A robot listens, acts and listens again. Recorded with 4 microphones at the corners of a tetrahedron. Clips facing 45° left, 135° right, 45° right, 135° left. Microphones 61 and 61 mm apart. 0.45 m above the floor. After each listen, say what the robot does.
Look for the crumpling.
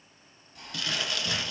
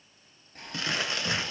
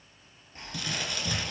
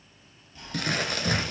Turn 170° left.
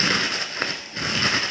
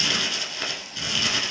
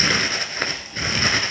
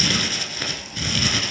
Facing the crumpling.